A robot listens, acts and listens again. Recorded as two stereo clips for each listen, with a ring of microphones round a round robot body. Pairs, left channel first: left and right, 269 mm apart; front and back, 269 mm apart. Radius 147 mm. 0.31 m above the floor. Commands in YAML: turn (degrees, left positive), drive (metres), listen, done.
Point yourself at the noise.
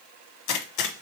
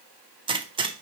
turn: 105
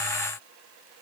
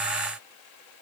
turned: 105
done: "Facing where the gunshot came from. I can't hear it now."